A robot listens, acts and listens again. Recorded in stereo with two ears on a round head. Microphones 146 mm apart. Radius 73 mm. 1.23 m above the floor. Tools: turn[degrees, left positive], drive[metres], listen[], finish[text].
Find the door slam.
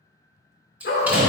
Action: turn[-30]
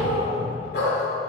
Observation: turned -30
Action: listen[]
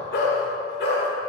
Action: finish[I heard a door slam, but can't make it out now. It was about 20° left or 140° right.]